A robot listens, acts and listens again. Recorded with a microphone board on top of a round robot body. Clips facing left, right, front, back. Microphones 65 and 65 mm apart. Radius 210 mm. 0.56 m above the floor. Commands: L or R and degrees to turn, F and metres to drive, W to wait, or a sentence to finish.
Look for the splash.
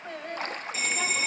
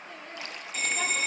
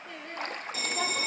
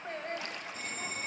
L45
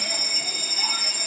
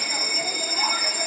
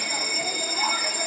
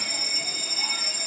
Facing where the splash came from. I can't hear it now.